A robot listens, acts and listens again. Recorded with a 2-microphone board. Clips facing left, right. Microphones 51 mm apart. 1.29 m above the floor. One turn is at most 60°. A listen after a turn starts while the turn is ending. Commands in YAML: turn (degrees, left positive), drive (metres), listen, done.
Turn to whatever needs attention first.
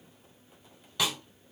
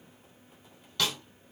listen: true
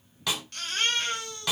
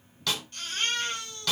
turn: 60
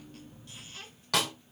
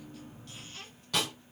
turn: 30
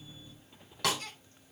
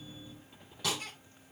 turn: -10
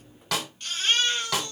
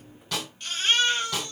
done: "Found it: a baby crying, straight ahead, 2 to 4 m away."